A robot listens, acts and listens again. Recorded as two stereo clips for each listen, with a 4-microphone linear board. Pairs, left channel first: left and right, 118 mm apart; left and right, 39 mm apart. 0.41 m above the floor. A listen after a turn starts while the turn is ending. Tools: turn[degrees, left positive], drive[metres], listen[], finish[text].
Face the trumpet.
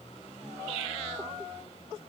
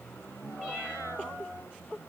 Action: listen[]
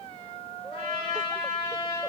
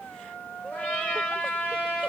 Thought: The trumpet: about 45° left or 135° left.
Action: turn[45]
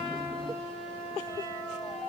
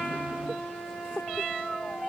Action: finish[Found it: a trumpet, straight ahead.]